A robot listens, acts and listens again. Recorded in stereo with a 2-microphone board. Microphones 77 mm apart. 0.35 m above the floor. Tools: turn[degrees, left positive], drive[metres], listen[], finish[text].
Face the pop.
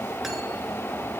Action: listen[]
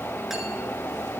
Action: listen[]
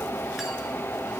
Action: finish[I can't make out a pop.]